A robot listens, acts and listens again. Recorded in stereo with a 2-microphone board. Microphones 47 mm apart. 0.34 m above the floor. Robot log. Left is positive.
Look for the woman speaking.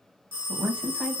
note: The woman speaking: about 20° right or 160° right.
cmd yaw -20
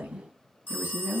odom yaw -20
note: The woman speaking: about 40° right or 140° right.
cmd yaw -40
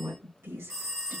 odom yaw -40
note: So it is at 110° right.
cmd yaw -110
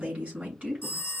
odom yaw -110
note: The woman speaking is now 25° right.
cmd yaw -25
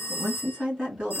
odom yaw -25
note: The woman speaking is now 25° right.
cmd yaw -25
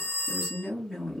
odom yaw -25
end: Found it: a woman speaking, straight ahead, over 4 m away.